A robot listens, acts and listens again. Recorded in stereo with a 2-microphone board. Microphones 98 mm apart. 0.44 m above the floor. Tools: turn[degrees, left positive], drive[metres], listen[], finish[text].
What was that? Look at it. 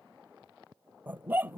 Thought: The dog barking: about 20° right or 160° right.
Action: turn[-20]
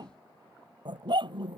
Thought: So it is at 125° right.
Action: turn[-125]
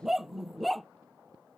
Action: finish[Found it: a dog barking, straight ahead.]